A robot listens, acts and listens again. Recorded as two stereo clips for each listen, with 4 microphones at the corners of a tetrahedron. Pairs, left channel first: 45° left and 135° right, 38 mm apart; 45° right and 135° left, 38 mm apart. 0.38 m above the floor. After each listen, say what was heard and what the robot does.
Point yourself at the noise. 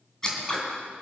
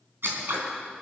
The scissors: 120° left. Turn 120° left.
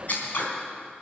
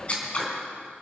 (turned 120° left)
The scissors is now 10° left. Turn 10° left.
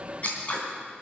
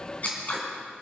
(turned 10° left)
Found it: scissors, straight ahead.